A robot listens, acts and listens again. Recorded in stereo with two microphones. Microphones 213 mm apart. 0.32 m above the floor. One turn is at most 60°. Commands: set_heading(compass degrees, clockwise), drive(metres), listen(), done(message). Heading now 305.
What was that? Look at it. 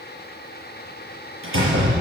set_heading(5)
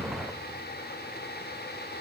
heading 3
set_heading(33)
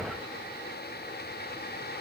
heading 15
set_heading(35)
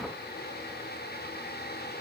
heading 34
done("I heard a door slam from this way, but can't make it out now.")